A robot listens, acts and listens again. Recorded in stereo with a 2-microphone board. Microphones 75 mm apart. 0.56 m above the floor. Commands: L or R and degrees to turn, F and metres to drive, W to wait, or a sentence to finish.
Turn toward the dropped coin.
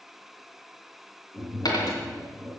L60
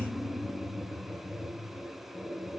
W
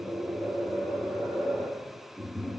I heard a dropped coin, but can't make it out now. It was about straight ahead or 60° left.